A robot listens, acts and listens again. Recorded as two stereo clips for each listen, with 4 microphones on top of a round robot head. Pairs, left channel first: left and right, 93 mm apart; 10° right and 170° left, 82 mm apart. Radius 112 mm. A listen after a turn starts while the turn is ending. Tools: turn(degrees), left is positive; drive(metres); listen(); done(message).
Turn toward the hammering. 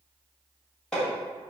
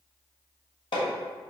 done("Facing the hammering.")